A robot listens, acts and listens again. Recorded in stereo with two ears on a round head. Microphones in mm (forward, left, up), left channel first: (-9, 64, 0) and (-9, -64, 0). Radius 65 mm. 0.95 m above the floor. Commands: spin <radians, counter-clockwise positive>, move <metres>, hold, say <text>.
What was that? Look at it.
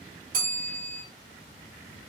spin -1.22
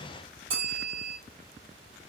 spin -0.70
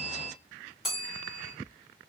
say Found it: a bell, straight ahead.